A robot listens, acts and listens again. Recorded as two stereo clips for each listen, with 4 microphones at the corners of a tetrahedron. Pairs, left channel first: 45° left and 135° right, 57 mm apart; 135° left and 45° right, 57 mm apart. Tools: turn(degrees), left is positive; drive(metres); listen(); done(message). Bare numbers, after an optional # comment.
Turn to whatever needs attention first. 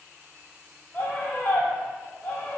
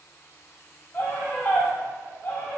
# The scream: 100° left.
turn(100)
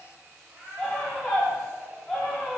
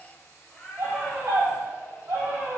# The scream is now 35° right.
turn(-35)
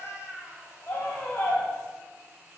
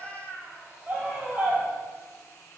# The scream is now 15° left.
turn(15)
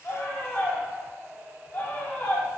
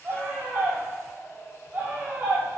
done("Found it: a scream, straight ahead.")